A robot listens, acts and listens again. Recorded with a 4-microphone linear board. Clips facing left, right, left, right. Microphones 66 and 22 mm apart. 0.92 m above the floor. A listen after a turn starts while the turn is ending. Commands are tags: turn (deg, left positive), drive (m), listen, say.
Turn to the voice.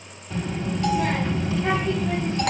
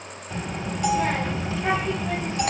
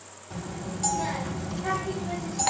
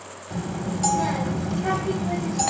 <turn deg="-30"/>
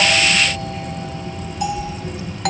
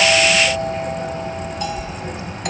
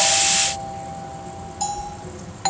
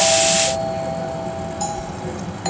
<turn deg="-150"/>
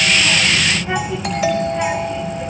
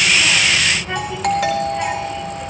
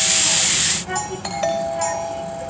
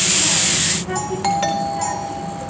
<turn deg="10"/>
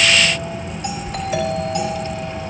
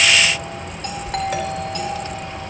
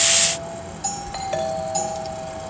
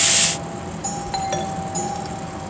<say>Facing the child speaking, 1 to 2 m away.</say>